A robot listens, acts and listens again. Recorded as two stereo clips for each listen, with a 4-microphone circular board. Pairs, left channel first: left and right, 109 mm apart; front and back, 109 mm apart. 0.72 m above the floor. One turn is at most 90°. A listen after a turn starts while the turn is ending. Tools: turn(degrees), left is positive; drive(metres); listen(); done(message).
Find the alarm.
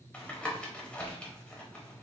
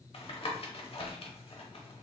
listen()
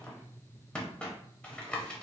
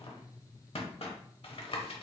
listen()
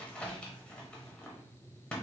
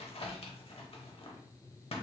done("I can't make out an alarm, only tapping.")